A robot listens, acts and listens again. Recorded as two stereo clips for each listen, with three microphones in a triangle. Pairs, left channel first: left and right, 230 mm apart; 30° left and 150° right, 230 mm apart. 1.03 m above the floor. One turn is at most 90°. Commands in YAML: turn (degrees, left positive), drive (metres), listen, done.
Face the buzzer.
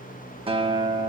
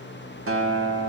listen: true
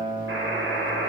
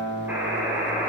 turn: -70
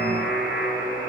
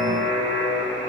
done: "Facing the buzzer."